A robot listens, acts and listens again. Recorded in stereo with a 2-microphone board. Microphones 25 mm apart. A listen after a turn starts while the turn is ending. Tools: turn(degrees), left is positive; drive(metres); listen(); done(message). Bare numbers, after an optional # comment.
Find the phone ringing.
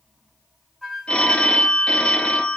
# The phone ringing: about 60° left or 120° left.
turn(60)
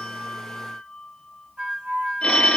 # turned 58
# So it is at 50° left.
turn(50)
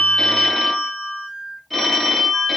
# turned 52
done("Facing the phone ringing.")